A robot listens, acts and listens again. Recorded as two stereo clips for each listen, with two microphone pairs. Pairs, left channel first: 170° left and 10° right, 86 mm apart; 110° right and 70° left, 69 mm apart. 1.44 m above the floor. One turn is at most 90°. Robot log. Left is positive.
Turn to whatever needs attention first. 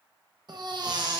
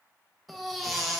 note: The baby crying: 15° right.
cmd yaw -15
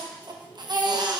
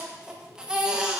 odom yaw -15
end: Found it: a baby crying, straight ahead.